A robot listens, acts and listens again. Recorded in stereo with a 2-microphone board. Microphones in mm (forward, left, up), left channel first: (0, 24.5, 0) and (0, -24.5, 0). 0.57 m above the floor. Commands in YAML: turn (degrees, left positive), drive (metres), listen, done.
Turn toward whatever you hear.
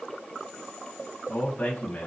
turn: 25
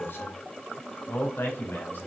turn: 140
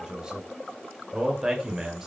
turn: -10
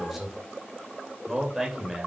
done: "Found it: a man speaking, straight ahead."